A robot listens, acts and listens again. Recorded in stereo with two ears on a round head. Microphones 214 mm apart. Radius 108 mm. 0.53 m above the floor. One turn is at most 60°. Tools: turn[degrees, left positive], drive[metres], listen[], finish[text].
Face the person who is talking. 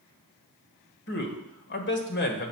Thought: The man speaking: about 45° left or 135° left.
Action: turn[45]
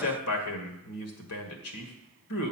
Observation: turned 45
Thought: So it is at 85° left.
Action: turn[60]
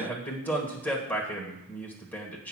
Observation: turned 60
Thought: The man speaking is now 10° left.
Action: turn[10]
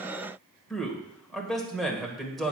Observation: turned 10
Action: finish[Found it: a man speaking, straight ahead.]